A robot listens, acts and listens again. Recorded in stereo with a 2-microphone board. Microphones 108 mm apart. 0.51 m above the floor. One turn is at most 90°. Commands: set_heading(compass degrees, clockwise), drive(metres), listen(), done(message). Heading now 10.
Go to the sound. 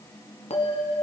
set_heading(300)
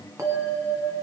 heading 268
set_heading(298)
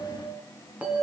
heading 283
set_heading(298)
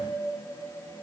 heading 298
drive(1.0)
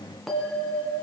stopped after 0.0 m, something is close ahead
done("Something is in my way. I am facing the bell but have not reached it.")